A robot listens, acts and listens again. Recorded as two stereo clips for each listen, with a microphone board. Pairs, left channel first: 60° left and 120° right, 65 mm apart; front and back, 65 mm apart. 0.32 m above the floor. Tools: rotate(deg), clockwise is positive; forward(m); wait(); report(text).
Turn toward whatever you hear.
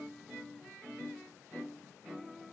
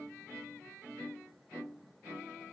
wait()
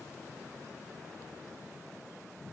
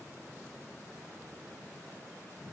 wait()
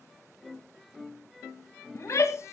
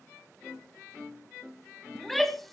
rotate(-85)
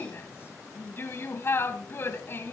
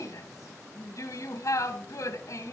rotate(-15)
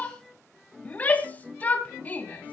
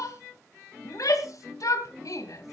report("Found it: a shout, straight ahead.")